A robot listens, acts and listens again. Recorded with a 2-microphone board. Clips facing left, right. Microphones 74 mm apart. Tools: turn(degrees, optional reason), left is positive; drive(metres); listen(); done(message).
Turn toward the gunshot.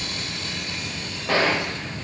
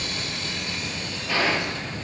turn(degrees=60, reason="The gunshot: about 60° left or 120° left.")
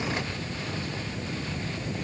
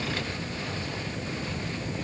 listen()
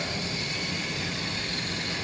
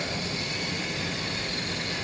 done("I heard a gunshot, but can't make it out now. It was about straight ahead or 60° left.")